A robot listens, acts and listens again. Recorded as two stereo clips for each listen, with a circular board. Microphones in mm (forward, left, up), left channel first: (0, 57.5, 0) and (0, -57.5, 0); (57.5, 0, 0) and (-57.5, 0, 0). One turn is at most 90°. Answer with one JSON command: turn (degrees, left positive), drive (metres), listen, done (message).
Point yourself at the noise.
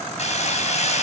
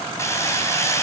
{"turn": 65}
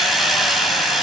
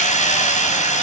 {"done": "Found it: hammering, straight ahead."}